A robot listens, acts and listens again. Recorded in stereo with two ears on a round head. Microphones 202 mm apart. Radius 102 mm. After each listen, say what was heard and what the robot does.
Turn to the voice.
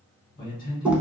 The man speaking: about 40° left or 140° left. Turn 40° left.
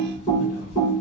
Keep listening.
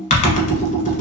Keep listening.
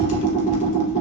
I heard a man speaking, but can't make it out now. It was about straight ahead or 100° left.